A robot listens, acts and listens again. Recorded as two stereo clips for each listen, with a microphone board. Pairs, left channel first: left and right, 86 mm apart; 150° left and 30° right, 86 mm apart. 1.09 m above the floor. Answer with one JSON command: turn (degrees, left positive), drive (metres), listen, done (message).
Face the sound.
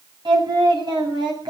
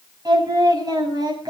{"turn": -65}
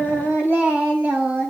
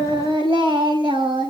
{"turn": -20}
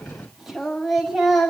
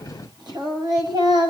{"done": "Found it: singing, straight ahead."}